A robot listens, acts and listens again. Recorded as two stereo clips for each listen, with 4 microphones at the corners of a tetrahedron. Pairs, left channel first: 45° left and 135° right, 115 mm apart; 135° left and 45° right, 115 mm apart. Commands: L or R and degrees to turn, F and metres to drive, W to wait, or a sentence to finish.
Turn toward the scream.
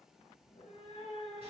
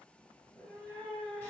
W
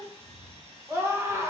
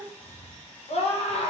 L155
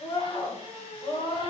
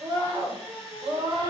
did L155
Facing the scream.